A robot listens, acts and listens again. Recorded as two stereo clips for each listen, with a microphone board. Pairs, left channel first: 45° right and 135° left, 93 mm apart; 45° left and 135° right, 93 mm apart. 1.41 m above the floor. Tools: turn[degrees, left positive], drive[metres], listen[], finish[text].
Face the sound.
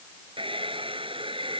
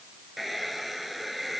Thought: The hair dryer: 135° left.
Action: turn[135]
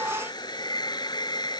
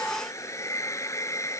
Thought: The hair dryer is now 10° right.
Action: turn[-10]
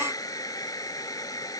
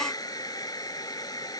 Action: finish[Found it: a hair dryer, straight ahead.]